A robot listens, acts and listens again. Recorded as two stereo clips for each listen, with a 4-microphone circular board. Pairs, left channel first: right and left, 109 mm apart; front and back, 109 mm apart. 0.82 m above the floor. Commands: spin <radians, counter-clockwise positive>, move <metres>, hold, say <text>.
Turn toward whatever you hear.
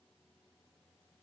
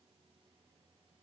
hold
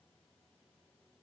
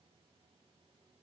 hold
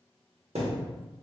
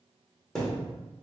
spin 1.48
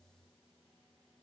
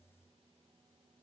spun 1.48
say Facing where the thud came from. I can't hear it now.